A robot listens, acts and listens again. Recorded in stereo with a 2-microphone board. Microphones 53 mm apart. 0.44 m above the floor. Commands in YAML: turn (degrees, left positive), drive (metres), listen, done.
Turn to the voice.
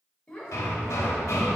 turn: 20
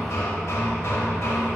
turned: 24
listen: true
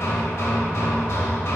listen: true
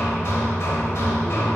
done: "I heard a child speaking, but can't make it out now. It was about 5° right or 140° left."